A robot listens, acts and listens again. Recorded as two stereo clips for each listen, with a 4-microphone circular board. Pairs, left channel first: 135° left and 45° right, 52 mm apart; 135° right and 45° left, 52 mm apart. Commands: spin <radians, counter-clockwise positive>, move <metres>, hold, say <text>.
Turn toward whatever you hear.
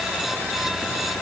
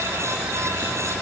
hold
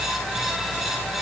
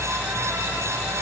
hold
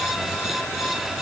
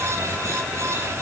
say I can't make out anything.